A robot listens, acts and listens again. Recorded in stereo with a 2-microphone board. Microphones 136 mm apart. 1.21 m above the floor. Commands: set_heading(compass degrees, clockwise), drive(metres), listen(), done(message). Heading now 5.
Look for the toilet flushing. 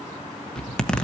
listen()
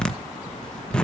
listen()
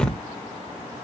done("I can't make out a toilet flushing, only a zipper.")